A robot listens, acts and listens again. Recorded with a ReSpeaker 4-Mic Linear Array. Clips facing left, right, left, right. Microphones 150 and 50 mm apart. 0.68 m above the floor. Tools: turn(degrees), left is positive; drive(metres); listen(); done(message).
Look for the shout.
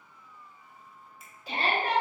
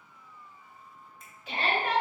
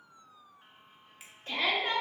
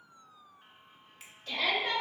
turn(degrees=40)
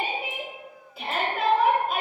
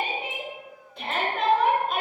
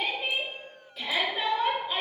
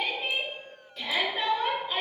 done("Found it: a shout, straight ahead.")